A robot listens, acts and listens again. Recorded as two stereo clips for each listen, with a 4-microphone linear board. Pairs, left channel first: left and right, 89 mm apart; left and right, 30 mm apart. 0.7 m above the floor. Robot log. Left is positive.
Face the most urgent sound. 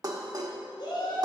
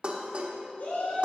note: The shout: about 70° left or 110° left.
cmd yaw +70
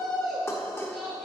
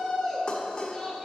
end: Facing the shout.